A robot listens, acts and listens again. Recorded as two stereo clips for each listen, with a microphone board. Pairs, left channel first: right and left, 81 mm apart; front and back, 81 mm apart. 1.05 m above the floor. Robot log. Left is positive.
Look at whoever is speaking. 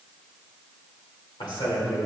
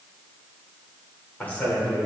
note: The man speaking: 75° right.
cmd yaw -75
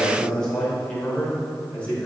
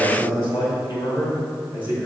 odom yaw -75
note: The man speaking is now 15° right.
cmd yaw -15
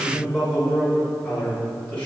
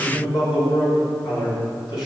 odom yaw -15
note: The man speaking is now 15° right.
cmd yaw -15
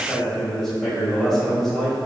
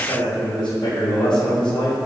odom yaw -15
end: Facing the man speaking.